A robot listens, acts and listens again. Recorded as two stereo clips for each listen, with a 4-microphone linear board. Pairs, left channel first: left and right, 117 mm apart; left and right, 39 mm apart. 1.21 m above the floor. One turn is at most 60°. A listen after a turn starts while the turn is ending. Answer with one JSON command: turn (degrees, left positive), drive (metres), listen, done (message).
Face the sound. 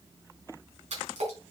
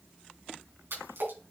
{"turn": -60}
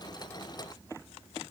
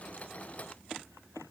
{"listen": true}
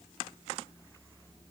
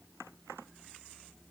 {"done": "I heard a splash, but can't make it out now. It was about 15° right or 45° right."}